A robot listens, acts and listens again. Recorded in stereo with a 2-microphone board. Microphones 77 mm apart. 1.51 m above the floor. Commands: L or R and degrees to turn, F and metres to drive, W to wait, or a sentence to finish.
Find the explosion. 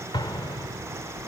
L90
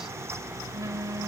I heard an explosion from this way, but can't make it out now.